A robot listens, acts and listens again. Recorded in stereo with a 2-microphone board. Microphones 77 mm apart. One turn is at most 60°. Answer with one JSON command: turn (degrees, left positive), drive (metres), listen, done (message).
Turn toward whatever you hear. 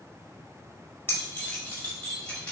{"turn": 30}
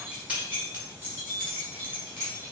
{"turn": -30}
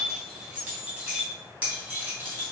{"turn": -20}
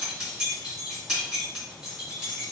{"done": "Found it: keys jangling, straight ahead."}